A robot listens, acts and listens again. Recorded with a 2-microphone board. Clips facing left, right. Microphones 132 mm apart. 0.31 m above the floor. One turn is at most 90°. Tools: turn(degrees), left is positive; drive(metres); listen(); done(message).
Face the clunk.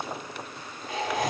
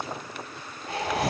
listen()
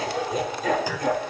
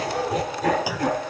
turn(degrees=-30)
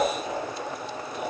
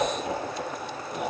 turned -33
listen()
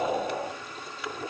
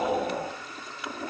done("I heard a clunk, but can't make it out now. It was about 25° left or 135° right.")